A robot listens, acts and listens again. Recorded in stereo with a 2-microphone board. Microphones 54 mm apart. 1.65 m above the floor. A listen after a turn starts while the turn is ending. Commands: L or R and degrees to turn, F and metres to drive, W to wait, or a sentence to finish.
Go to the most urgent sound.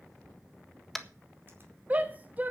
R30
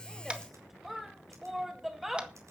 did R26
F1.0
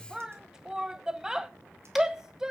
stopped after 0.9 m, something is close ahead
R10
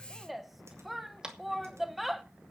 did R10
Arrived at the shout, straight ahead.